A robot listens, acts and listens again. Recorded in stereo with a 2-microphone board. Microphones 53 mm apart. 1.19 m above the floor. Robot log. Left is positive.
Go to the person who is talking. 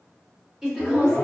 cmd yaw -30
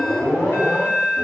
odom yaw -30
cmd idle
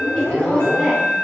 cmd idle
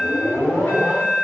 end: I heard a woman speaking, but can't make it out now. It was about 20° left or 140° right. I did not reach it.